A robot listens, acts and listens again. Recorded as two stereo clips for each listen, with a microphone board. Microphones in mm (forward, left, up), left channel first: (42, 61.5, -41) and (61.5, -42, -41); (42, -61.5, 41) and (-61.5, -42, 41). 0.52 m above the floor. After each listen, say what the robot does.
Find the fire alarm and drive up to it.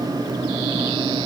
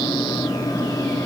Keep listening.
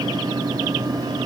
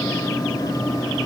Keep listening.
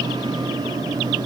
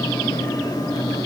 I can't make out a fire alarm to turn to.